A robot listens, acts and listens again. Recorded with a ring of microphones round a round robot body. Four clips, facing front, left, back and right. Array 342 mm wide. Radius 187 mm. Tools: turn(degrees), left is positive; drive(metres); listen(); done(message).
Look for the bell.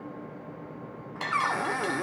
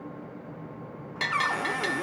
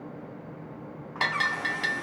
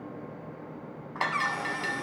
turn(degrees=140)
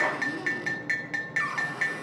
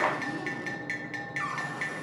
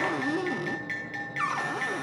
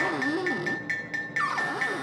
turn(degrees=-20)
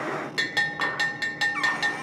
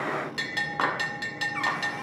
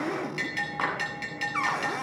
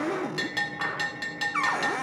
done("Found it: a bell, straight ahead.")